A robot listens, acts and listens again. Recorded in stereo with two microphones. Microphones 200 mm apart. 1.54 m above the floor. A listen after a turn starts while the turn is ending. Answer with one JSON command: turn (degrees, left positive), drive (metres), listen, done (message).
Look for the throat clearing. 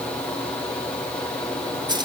{"listen": true}
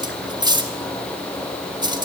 {"listen": true}
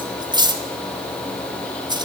{"done": "I can't make out throat clearing, only cutlery clinking."}